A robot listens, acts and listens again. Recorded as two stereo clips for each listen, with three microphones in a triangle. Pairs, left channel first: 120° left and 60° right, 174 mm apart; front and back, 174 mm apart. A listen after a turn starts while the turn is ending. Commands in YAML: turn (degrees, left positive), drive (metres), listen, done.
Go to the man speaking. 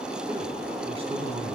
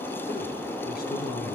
drive: 1.0
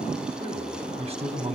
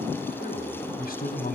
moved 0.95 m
turn: -10
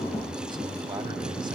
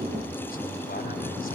drive: 1.0
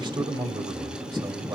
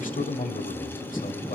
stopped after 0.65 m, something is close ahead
done: "I am next to the man speaking."